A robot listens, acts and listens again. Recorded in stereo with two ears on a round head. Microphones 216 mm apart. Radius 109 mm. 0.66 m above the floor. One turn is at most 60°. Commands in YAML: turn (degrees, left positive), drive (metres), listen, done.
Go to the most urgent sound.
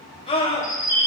turn: 25
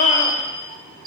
listen: true
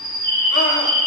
listen: true
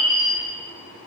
done: "I heard a scream, but can't make it out now. It was about straight ahead or 130° left. I did not reach it."